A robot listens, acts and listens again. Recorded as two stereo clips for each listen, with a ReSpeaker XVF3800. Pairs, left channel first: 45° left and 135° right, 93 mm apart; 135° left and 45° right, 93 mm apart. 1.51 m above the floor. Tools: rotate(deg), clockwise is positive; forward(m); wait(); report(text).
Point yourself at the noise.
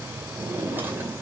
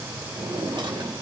rotate(65)
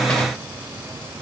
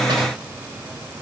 wait()
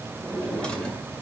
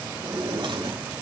rotate(35)
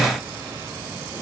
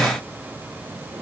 wait()
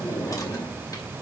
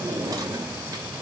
report("Found it: a drawer, straight ahead, 2 to 4 m away.")